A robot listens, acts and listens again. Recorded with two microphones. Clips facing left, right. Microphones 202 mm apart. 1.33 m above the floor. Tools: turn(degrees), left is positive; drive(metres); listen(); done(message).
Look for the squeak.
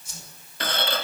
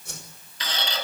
turn(degrees=60)
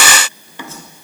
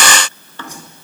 turn(degrees=15)
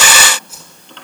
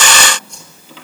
done("Facing the squeak.")